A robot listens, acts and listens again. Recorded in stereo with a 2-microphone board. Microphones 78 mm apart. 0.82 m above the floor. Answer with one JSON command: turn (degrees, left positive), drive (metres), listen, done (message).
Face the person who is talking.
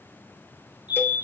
{"listen": true}
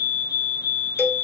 {"listen": true}
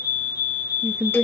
{"turn": -30}
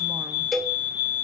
{"listen": true}
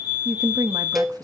{"turn": -110}
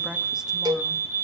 {"listen": true}
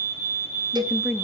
{"turn": -10}
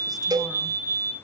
{"listen": true}
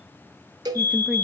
{"listen": true}
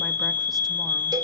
{"done": "Facing where the woman speaking came from. I can't hear it now."}